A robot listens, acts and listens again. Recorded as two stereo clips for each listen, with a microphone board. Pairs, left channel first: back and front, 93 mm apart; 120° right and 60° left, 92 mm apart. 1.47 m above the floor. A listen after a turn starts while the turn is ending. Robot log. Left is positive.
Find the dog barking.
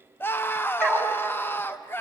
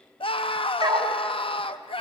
note: The dog barking: 100° left.
cmd yaw +100
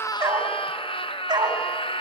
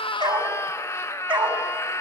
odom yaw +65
note: The dog barking is now 35° left.
cmd yaw +35
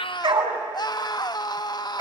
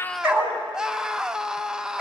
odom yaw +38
end: Found it: a dog barking, straight ahead, 2 to 4 m away.